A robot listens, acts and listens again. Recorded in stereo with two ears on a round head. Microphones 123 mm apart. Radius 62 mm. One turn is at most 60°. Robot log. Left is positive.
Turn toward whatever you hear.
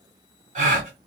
note: The gasp: about 60° right or 120° right.
cmd yaw -60
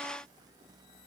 cmd idle
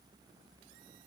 end: I heard a gasp, but can't make it out now. It was about straight ahead or 60° right.